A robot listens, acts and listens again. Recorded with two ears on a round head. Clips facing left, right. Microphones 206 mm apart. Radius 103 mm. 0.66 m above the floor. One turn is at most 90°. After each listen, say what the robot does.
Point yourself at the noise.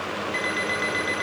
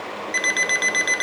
Turn 65° right.
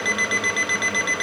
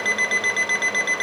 Facing the alarm clock.